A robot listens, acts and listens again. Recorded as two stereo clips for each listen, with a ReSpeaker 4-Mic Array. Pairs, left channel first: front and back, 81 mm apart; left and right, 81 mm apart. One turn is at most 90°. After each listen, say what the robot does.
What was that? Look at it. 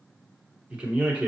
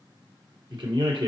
Turn 90° right.
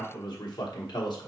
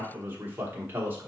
Turn 25° right.
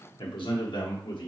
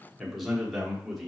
Found it: a man speaking, straight ahead.